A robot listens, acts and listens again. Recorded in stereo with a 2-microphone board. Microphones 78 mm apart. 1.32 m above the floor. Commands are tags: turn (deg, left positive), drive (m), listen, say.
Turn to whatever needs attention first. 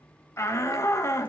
<turn deg="35"/>
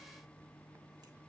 <listen/>
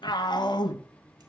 <turn deg="110"/>
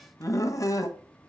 <turn deg="45"/>
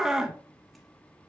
<say>Found it: a shout, straight ahead.</say>